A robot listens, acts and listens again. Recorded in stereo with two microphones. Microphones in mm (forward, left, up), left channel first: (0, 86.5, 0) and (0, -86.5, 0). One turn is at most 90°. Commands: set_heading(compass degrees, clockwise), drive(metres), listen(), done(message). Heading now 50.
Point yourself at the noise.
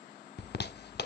set_heading(340)
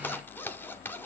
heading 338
set_heading(328)
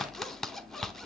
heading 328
done("Facing the zipper.")